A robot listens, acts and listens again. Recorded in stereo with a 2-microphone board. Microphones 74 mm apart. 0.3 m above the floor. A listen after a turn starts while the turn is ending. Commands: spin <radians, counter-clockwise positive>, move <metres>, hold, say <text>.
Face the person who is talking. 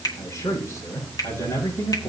spin 0.70
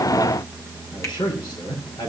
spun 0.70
spin 1.66
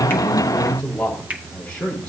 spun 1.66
spin 0.26
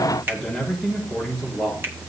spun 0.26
say Found it: a man speaking, straight ahead.